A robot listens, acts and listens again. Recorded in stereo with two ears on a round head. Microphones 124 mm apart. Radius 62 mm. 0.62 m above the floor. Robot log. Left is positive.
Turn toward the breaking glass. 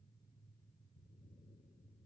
cmd idle
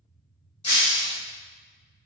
note: The breaking glass: about 35° left or 145° left.
cmd yaw +35
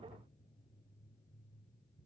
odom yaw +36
cmd idle
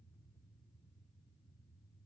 end: I heard breaking glass, but can't make it out now. It was about straight ahead or 110° left.